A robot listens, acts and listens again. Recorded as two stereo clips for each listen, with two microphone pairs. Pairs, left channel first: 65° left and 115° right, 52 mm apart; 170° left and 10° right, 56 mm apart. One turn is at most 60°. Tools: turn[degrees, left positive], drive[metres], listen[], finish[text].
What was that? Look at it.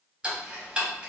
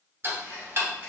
Thought: The ticking: 40° right.
Action: turn[-40]
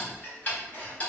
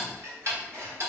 Thought: The ticking is now 15° left.
Action: turn[15]
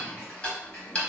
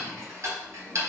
Action: finish[Found it: ticking, straight ahead.]